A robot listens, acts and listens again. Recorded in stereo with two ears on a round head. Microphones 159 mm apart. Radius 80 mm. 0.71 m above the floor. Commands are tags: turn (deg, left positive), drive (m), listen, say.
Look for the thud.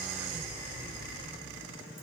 <listen/>
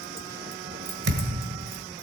<turn deg="-60"/>
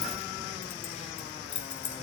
<listen/>
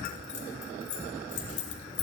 <say>I heard a thud, but can't make it out now. It was about straight ahead or 60° right.</say>